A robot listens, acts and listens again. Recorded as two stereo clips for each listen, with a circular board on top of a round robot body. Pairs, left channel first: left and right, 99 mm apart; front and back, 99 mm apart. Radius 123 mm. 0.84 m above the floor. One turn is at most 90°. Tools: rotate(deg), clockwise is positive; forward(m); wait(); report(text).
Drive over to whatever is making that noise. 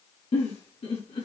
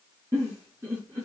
rotate(-90)
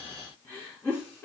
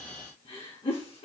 rotate(-20)
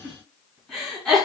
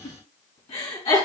forward(1.0)
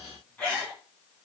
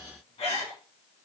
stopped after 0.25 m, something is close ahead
rotate(-15)
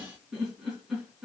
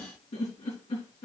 report("Blocked. The giggle is further on, straight ahead.")